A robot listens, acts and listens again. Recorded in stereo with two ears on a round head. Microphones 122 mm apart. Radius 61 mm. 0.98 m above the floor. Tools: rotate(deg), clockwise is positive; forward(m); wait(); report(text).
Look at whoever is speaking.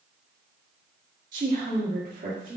rotate(65)
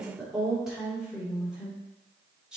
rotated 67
report("Facing the woman speaking.")